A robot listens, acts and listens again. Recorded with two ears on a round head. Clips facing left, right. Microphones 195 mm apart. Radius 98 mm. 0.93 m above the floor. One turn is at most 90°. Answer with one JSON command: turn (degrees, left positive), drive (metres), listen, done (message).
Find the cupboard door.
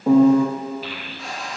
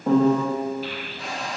{"turn": -55}
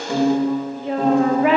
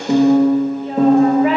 {"listen": true}
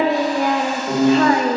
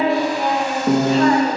{"listen": true}
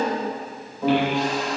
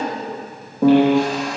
{"done": "I heard a cupboard door, but can't make it out now. It was about straight ahead or 70° right."}